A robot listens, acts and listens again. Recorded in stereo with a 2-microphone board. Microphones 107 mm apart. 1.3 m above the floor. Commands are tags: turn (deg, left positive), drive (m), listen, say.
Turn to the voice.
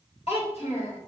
<turn deg="70"/>
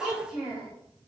<say>Found it: a child speaking, straight ahead, 2 to 4 m away.</say>